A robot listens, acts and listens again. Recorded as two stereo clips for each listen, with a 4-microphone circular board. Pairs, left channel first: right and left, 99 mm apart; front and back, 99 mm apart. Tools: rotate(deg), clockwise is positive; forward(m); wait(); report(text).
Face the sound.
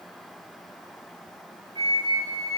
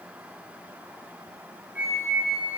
rotate(-105)
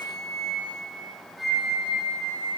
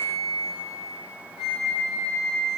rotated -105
report("Found it: a flute, straight ahead, 2 to 4 m away.")